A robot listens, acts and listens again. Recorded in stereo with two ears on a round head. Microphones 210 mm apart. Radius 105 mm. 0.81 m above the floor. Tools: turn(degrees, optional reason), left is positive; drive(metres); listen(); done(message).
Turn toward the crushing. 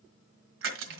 turn(degrees=-60, reason="The crushing: about 60° right or 120° right.")
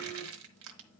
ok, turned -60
turn(degrees=-65, reason="So it is at 65° right.")
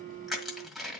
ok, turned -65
done("Found it: crushing, straight ahead, 1 to 2 m away.")